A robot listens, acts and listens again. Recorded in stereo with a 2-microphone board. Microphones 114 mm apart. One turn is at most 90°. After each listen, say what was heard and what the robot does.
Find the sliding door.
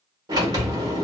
The sliding door: about 35° right or 145° right. Turn 35° right.
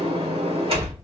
So it is at 105° right. Turn 90° right.
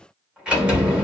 The sliding door is now 15° right. Turn 15° right.
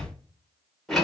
Found it: a sliding door, straight ahead, 1 to 2 m away.